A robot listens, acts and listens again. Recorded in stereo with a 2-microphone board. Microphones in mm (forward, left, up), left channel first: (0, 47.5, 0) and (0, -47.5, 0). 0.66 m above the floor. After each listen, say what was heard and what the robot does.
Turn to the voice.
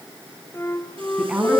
Turn 30° right.
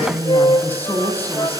So it is at 20° left. Turn 20° left.
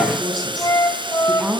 Facing the woman speaking.